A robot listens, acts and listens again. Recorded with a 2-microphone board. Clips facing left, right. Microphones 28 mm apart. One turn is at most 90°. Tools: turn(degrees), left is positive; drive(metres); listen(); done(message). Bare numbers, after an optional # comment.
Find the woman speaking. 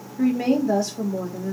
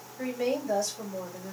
turn(30)
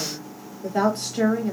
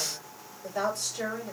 # So it is at 140° left.
turn(90)
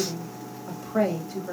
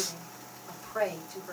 # The woman speaking is now 55° left.
turn(55)
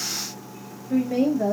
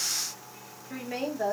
done("Facing the woman speaking, 1 to 2 m away.")